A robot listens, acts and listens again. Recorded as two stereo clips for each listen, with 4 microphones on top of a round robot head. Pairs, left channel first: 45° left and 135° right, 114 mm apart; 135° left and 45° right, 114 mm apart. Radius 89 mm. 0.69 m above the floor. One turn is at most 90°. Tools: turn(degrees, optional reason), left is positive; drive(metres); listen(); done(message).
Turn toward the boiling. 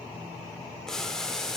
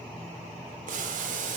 turn(degrees=-40, reason="The boiling: 40° right.")
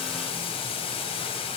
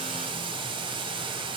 done("Found it: boiling, straight ahead, under 1 m away.")